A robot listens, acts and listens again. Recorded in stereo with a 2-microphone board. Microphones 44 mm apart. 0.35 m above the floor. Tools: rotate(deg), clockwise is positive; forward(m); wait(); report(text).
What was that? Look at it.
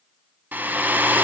rotate(40)
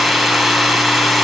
report("Facing the hair dryer.")